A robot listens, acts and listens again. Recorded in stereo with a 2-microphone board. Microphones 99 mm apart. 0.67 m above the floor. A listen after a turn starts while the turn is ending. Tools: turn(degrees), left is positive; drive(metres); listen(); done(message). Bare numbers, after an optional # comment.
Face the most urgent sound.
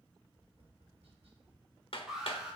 turn(-30)
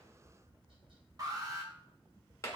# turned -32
# So it is at 140° right.
turn(-140)
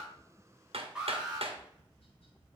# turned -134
# The alarm is now 10° right.
turn(-10)
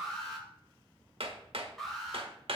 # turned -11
done("Facing the alarm, 2 to 4 m away.")